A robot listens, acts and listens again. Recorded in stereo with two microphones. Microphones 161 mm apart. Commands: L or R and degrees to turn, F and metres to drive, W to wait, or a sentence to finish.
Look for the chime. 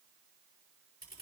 W
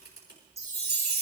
R45
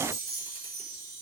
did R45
R90
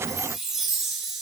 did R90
Facing the chime.